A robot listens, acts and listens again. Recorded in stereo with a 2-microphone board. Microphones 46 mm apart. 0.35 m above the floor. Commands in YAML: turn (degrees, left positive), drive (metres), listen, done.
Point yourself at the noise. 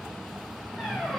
turn: 30
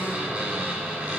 turn: -30
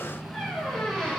turn: 10
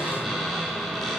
done: "Facing the squeak, over 4 m away."